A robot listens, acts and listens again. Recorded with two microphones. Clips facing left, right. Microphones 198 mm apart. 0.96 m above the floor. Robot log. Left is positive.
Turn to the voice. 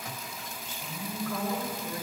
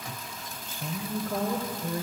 note: The woman speaking: about 40° right or 140° right.
cmd yaw -40
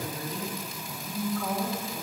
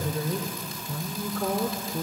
note: So it is at 100° right.
cmd yaw -100
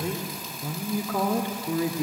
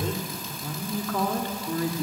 note: The woman speaking is now 20° left.
cmd yaw +20
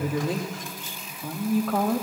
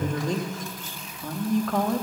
end: Facing the woman speaking, 1 to 2 m away.